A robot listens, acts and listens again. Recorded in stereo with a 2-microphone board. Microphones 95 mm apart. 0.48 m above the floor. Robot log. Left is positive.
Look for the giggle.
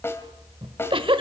note: The giggle: about 65° right or 115° right.
cmd yaw -65
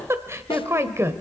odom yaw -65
note: So it is at 30° right.
cmd yaw -30
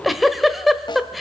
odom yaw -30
end: Facing the giggle.